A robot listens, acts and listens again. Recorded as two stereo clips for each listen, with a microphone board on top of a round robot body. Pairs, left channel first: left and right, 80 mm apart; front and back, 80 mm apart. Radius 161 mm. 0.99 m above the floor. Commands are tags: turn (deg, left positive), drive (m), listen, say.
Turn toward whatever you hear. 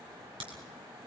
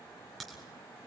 <turn deg="-90"/>
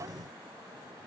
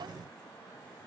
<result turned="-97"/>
<turn deg="10"/>
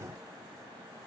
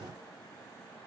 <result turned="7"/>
<say>I heard a crack from this way, but can't make it out now.</say>